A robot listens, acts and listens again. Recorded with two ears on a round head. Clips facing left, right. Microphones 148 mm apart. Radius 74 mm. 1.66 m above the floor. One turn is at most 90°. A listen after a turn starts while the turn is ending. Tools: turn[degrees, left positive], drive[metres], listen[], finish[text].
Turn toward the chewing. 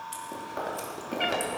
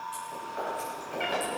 Thought: The chewing: about 55° left or 125° left.
Action: turn[55]
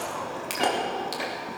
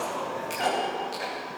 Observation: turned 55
Thought: So it is at 70° left.
Action: turn[70]
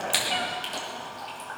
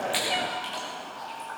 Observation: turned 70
Thought: The chewing is now 30° left.
Action: turn[30]
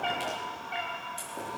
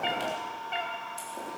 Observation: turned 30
Action: listen[]
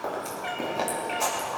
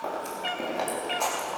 Action: finish[Facing the chewing.]